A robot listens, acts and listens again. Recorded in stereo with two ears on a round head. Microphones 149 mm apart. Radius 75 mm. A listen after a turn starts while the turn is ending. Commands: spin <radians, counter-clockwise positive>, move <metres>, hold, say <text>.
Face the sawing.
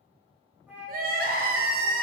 hold
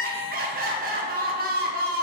hold
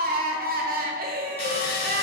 spin 0.61
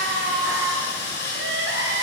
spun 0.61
spin 1.92
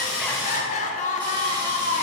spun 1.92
hold
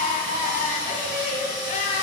hold
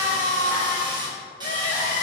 spin -0.44
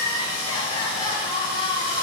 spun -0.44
spin -0.17
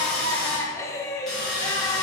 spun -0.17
say Found it: sawing, straight ahead, 1 to 2 m away.